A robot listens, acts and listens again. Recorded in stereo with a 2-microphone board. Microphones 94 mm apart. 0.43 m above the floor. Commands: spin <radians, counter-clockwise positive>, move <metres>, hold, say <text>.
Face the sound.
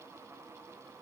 hold
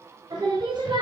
spin -0.96
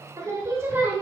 spin -0.35
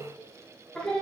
spin 0.17
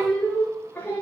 spin 0.44
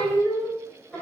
spin 0.26
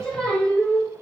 say Found it: singing, straight ahead.